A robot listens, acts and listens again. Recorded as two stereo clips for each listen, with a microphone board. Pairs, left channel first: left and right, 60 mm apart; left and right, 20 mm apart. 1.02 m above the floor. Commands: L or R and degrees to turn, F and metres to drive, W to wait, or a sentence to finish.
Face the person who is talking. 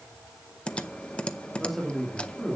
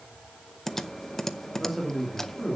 L30
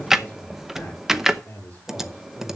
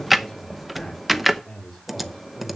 L155
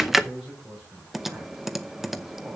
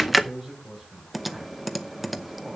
R10
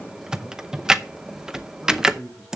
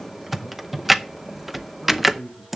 Facing the man speaking.